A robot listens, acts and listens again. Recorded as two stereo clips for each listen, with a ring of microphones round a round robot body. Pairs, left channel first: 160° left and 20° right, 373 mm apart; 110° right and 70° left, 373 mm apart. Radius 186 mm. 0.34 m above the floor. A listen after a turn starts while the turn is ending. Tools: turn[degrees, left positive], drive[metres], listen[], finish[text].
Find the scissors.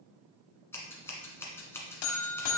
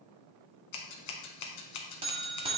Thought: The scissors: 120° right.
Action: turn[-120]
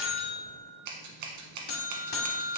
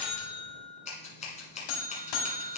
Thought: The scissors is now 40° right.
Action: turn[-40]
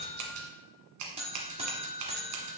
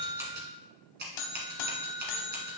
Action: finish[Facing the scissors.]